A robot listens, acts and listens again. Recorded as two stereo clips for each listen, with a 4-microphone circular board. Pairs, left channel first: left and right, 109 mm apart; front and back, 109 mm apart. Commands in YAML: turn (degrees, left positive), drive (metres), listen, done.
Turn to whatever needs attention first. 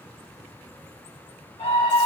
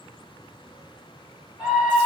turn: 100
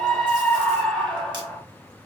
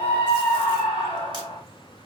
turn: 10
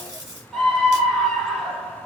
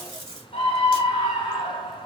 done: "Found it: a scream, straight ahead, 1 to 2 m away."